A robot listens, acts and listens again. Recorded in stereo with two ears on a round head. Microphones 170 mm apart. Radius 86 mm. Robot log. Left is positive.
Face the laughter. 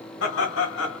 note: The laughter: about 70° left or 110° left.
cmd yaw +70
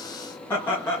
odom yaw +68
note: So it is at 15° left.
cmd yaw +15
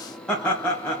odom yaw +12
note: The laughter is now 10° left.
cmd yaw +10
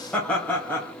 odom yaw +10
note: The laughter is now 10° left.
cmd yaw +10
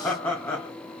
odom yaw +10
note: The laughter is now 15° left.
cmd yaw +15
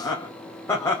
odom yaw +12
note: The laughter is now 15° left.
cmd yaw +15
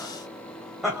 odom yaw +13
end: Facing the laughter, 1 to 2 m away.